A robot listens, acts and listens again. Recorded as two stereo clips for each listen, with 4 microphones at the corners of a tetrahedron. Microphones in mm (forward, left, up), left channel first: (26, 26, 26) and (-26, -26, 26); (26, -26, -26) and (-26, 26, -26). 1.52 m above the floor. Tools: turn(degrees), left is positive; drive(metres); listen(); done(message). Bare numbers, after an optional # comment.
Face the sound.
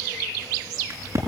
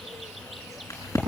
# The crack: 90° right.
turn(-90)
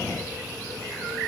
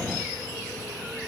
done("I heard a crack from this way, but can't make it out now.")